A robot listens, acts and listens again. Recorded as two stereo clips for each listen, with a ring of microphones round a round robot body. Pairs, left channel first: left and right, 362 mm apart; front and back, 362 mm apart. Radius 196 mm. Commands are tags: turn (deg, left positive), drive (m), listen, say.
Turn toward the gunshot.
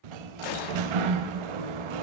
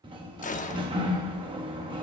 <turn deg="70"/>
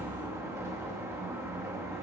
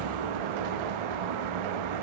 <say>Facing where the gunshot came from. I can't hear it now.</say>